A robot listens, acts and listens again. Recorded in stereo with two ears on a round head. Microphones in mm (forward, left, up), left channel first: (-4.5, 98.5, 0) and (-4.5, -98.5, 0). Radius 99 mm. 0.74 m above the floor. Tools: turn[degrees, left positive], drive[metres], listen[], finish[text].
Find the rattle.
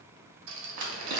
Thought: The rattle: about 60° right or 120° right.
Action: turn[-60]
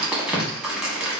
Action: listen[]
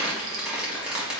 Action: listen[]
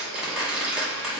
Action: finish[I heard a rattle, but can't make it out now. It was about straight ahead or 60° right.]